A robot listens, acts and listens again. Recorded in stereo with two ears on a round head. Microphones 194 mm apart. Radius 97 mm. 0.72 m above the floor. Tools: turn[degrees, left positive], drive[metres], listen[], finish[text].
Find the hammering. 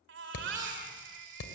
Action: turn[90]
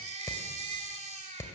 Thought: So it is at 15° left.
Action: turn[15]
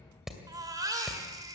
Action: finish[Found it: hammering, straight ahead.]